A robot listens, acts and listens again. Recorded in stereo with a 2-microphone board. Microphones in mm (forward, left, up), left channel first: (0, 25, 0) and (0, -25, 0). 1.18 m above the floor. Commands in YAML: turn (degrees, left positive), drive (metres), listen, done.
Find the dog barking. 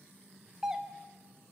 listen: true
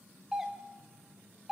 listen: true
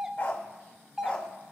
turn: 30
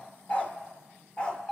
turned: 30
turn: 20
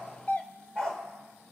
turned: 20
turn: 15
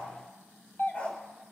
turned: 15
turn: 30
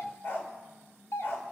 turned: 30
turn: 125
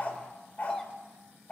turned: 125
turn: 30
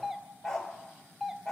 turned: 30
turn: 10
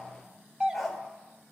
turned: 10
done: "Facing the dog barking."